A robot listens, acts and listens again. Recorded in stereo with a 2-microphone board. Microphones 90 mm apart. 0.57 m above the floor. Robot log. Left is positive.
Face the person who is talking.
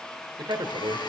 note: The man speaking: about 65° right or 115° right.
cmd yaw -65
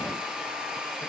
cmd idle
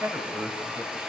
note: So it is at 25° right.
cmd yaw -25
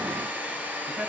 cmd idle
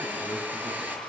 note: The man speaking is now 20° right.
cmd yaw -20
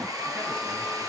cmd idle
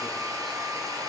cmd idle
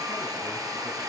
end: I heard a man speaking from this way, but can't make it out now.